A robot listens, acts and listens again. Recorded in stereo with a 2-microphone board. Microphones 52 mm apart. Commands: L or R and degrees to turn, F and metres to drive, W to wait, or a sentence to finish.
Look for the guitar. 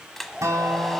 R90
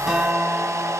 Facing the guitar, 2 to 4 m away.